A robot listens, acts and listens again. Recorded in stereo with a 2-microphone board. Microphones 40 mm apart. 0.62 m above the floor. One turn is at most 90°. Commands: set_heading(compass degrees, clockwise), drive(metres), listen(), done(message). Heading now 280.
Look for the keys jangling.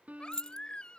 set_heading(265)
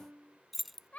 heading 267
done("Found it: keys jangling, straight ahead.")